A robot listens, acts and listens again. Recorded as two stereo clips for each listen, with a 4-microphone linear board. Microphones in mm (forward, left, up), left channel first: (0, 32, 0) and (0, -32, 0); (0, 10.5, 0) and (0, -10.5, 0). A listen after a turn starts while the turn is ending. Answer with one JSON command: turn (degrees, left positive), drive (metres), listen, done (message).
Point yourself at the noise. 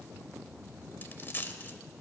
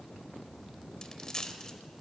{"turn": 35}
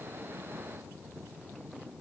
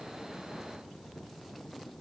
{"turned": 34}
{"listen": true}
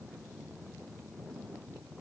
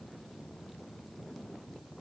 {"done": "I heard a dropped coin, but can't make it out now. It was about 5° left or 110° left."}